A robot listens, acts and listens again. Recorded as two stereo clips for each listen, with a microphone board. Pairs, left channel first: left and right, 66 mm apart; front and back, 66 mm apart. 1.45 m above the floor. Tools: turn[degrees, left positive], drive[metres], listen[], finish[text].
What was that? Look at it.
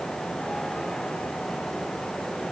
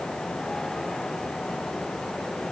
Action: listen[]
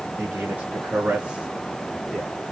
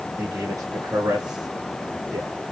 Thought: The man speaking: 170° right.
Action: turn[-170]
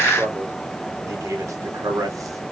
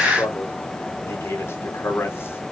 Thought: The man speaking is now 55° right.
Action: turn[-55]
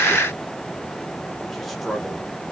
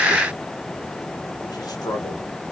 Action: finish[Found it: a man speaking, straight ahead, 1 to 2 m away.]